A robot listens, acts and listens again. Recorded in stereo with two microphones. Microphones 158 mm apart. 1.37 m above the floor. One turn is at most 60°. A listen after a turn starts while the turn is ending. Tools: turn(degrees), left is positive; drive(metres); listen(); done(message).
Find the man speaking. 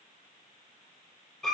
listen()
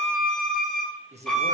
turn(degrees=-45)
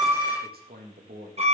turn(degrees=-60)
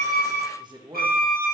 turn(degrees=-30)
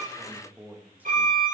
turn(degrees=-10)
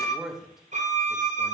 done("Found it: a man speaking, straight ahead, 1 to 2 m away.")